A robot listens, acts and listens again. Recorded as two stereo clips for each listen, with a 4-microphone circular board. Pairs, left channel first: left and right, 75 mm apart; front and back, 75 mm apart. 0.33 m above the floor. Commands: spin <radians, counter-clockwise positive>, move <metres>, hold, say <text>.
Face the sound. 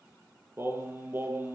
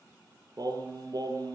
spin -2.62
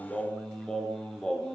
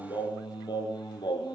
say Found it: singing, straight ahead, over 4 m away.